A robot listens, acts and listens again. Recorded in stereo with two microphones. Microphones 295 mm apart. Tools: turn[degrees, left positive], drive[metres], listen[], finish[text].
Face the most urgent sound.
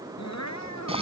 Thought: The crying: about 65° left or 115° left.
Action: turn[65]
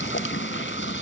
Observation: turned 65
Action: listen[]
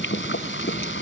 Action: listen[]
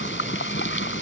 Action: finish[I heard crying, but can't make it out now. It was about straight ahead or 50° left.]